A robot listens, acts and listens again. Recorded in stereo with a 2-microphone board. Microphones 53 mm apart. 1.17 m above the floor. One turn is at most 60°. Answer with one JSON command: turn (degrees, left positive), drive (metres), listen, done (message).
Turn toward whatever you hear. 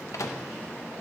{"turn": 60}
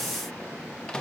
{"turn": 20}
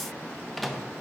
{"done": "Facing the microwave."}